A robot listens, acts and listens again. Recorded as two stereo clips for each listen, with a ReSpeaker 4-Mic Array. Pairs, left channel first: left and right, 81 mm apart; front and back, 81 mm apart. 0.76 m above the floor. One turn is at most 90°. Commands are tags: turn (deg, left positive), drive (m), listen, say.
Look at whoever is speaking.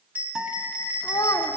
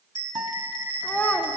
<turn deg="65"/>
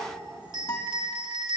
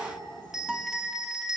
<listen/>
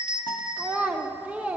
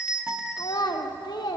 <turn deg="-20"/>
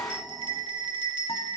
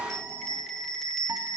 <listen/>
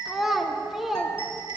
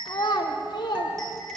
<say>Facing the child speaking, under 1 m away.</say>